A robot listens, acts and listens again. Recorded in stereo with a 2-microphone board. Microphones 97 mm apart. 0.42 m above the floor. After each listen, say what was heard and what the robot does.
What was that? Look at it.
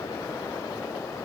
Keep listening.
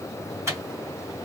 The microwave: about 30° right or 150° right. Turn 30° right.
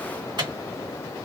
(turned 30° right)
So it is at 115° right. Turn 115° right.
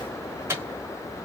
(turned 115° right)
The microwave is now 30° right. Turn 30° right.
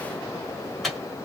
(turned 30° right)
Facing the microwave.